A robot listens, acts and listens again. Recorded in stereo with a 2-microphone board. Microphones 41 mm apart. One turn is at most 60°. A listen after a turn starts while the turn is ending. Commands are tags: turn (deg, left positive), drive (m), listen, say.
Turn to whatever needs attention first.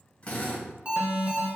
<turn deg="-30"/>
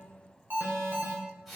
<turn deg="-60"/>
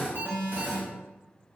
<turn deg="-55"/>
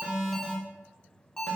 <turn deg="20"/>
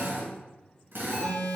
<say>Found it: an alarm, straight ahead, 1 to 2 m away.</say>